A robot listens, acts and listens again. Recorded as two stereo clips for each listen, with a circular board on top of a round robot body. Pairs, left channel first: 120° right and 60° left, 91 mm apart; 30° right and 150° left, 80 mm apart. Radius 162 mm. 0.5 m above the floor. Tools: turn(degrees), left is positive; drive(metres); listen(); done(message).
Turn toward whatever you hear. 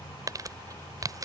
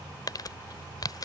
turn(degrees=10)
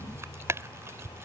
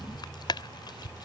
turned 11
done("Found it: crumpling, straight ahead.")